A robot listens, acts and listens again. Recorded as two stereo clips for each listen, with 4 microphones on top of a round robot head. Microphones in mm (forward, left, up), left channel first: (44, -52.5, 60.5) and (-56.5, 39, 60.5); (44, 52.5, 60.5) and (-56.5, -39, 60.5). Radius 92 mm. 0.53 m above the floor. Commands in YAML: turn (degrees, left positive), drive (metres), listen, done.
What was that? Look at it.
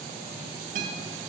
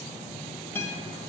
turn: 115
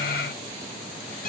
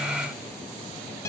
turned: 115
turn: -25
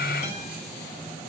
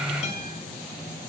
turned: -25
done: "Found it: a guitar, straight ahead, 1 to 2 m away."